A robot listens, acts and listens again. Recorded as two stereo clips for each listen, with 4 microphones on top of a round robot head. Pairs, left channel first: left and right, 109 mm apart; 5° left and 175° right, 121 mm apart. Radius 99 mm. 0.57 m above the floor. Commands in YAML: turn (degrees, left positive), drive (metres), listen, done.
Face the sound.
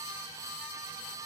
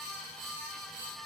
listen: true
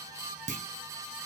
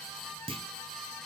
turn: -115
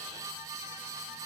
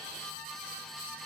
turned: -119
done: "Facing where the clunk came from. I can't hear it now."